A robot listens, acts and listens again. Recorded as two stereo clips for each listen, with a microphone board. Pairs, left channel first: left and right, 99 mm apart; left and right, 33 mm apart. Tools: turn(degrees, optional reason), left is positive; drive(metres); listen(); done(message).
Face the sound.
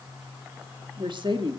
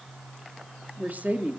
turn(degrees=-55, reason="The woman speaking: about 55° right or 125° right.")
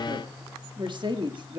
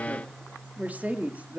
turn(degrees=-60, reason="So it is at 60° right.")
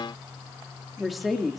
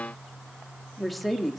done("Found it: a woman speaking, straight ahead.")